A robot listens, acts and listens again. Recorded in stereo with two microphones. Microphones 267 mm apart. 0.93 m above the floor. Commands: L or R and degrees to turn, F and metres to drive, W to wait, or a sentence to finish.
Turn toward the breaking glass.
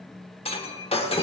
L20
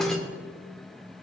Facing the breaking glass.